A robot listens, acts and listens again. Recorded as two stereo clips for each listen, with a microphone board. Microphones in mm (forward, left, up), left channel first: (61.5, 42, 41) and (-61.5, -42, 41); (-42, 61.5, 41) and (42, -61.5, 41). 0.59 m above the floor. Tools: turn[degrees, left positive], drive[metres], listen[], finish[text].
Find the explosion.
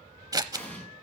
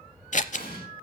Thought: The explosion: 115° left.
Action: turn[115]
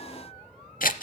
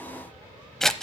Action: finish[I heard an explosion from this way, but can't make it out now.]